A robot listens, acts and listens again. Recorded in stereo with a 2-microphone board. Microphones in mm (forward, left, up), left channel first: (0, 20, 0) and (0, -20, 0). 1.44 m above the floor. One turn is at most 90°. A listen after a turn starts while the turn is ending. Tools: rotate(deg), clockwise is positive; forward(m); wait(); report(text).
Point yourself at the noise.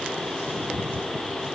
wait()
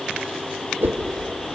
rotate(60)
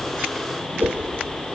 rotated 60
rotate(60)
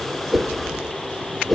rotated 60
report("Found it: a whoosh, straight ahead, 1 to 2 m away.")